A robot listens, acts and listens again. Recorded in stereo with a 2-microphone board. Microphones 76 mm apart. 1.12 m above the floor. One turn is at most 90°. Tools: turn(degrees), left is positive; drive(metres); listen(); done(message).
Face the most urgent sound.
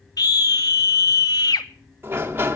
turn(degrees=60)
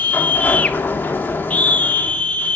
turn(degrees=25)
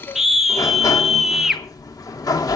done("Facing the scream, under 1 m away.")